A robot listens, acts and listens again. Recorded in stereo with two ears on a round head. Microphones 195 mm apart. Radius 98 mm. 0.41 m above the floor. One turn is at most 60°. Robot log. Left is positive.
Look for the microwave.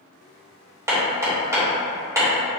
cmd idle
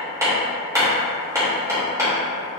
cmd idle
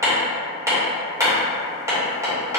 end: I can't make out a microwave to turn to.